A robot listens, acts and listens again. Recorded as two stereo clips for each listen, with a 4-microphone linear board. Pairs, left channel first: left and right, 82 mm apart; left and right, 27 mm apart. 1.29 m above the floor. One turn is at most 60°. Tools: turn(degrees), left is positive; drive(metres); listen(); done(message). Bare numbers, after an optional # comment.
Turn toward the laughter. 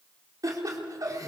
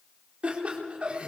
# The laughter: about 45° right or 135° right.
turn(-45)
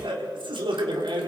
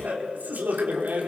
# So it is at 90° right.
turn(-60)
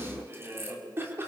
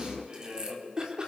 # The laughter is now 30° right.
turn(-30)
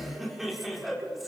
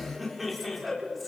done("Found it: laughter, straight ahead, 2 to 4 m away.")